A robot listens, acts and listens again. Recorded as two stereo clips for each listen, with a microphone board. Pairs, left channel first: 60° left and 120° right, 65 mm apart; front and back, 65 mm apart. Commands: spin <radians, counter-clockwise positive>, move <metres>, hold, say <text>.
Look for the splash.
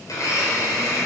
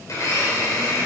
hold
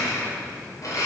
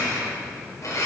hold
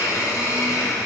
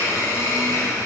say I can't make out a splash to turn to.